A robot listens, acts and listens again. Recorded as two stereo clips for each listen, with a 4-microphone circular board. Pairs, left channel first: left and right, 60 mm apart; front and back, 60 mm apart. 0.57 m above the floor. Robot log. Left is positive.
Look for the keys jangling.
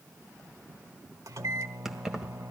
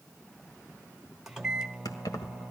note: The keys jangling: 10° right.
cmd yaw -10
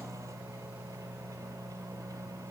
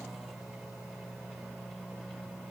cmd idle
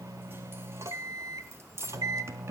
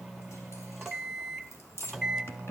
note: The keys jangling is now 45° right.
cmd yaw -45
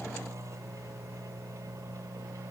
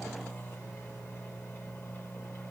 cmd idle
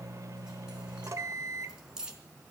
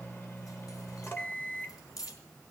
note: The keys jangling is now 10° right.
cmd yaw -10
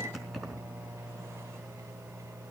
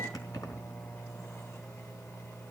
end: Found it: keys jangling, straight ahead.